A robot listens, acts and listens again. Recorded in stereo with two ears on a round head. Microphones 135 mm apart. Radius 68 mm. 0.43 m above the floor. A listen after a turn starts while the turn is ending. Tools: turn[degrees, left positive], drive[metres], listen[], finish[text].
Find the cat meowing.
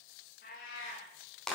Thought: The cat meowing: about 60° left or 120° left.
Action: turn[60]
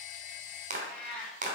Thought: So it is at 10° left.
Action: turn[10]
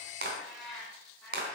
Action: finish[Found it: a cat meowing, straight ahead.]